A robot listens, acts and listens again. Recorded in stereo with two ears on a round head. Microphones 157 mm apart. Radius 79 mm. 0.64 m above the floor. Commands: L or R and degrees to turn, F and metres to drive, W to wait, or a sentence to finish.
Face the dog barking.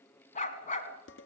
L40
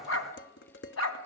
L90
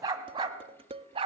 R30
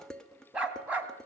R10
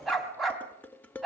Found it: a dog barking, straight ahead.